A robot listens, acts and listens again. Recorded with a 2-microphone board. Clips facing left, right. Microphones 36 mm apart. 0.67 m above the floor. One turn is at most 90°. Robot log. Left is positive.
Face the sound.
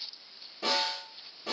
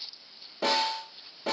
cmd yaw -90
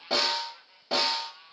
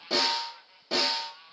note: So it is at 15° left.
cmd yaw +15
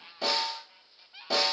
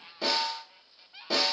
end: Found it: a snare drum, straight ahead, 1 to 2 m away.